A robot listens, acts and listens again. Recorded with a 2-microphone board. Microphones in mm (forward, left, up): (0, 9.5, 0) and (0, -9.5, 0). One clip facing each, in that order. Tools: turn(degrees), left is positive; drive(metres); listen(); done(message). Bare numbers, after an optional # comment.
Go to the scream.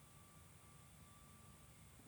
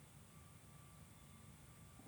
listen()
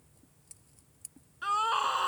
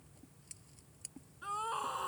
# The scream: about 45° left or 135° left.
turn(45)
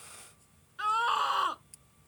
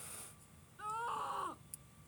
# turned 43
# So it is at 85° left.
turn(85)
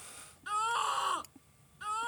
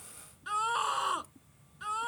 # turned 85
drive(1.0)
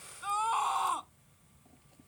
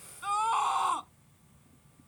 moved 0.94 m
drive(1.0)
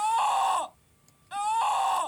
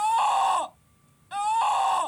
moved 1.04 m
drive(1.0)
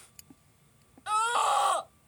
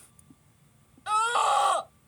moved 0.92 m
# The scream is now 10° right.
turn(-10)
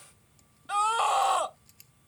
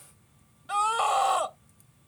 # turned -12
drive(1.0)
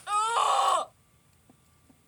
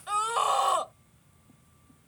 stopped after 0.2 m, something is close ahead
# The scream is now 10° left.
turn(10)
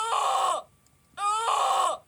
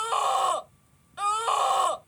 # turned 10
done("I am next to the scream.")